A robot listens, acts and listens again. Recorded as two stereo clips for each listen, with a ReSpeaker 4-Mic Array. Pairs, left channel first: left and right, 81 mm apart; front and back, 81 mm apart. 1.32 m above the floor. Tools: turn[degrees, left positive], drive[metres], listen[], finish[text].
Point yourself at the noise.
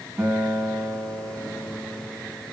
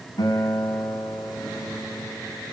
Thought: The guitar: 40° right.
Action: turn[-40]
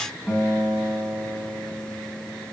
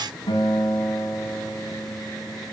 Thought: The guitar is now 10° right.
Action: turn[-10]
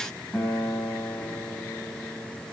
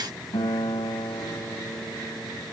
Action: finish[Facing the guitar, over 4 m away.]